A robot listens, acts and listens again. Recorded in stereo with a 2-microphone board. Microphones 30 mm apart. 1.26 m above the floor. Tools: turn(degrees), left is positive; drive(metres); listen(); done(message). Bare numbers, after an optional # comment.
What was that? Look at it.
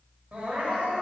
# The crying: about 55° right or 125° right.
turn(-55)
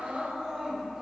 # So it is at 20° right.
turn(-20)
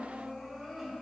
done("Facing the crying.")